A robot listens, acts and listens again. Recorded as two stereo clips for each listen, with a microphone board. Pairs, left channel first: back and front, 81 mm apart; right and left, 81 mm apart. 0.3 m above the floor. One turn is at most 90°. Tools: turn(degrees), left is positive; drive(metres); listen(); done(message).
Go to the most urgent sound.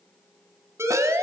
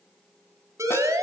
turn(degrees=50)
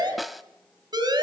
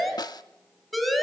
drive(metres=1.0)
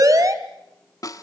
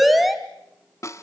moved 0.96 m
drive(metres=1.0)
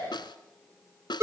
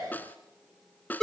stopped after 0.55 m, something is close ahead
done("Arrived at the siren, straight ahead.")